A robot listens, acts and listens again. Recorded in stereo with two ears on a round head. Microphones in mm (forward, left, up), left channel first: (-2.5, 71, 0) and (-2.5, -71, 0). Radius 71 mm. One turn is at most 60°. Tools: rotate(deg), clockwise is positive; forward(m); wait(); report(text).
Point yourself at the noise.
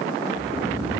rotate(25)
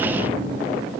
rotate(60)
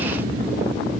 rotate(60)
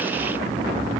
rotate(10)
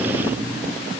report("Facing the snoring.")